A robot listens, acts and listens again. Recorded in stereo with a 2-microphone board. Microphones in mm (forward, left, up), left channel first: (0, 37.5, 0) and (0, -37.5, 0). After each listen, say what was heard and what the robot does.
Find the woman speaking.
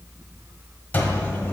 Keep listening.
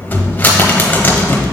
Keep listening.
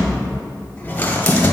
I can't make out a woman speaking, only a cupboard door.